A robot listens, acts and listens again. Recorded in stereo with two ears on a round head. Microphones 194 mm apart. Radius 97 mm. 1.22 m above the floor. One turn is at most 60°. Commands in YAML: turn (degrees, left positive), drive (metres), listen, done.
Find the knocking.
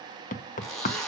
turn: 35
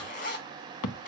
turn: 60
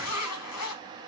turn: 50
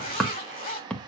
done: "Found it: knocking, straight ahead, under 1 m away."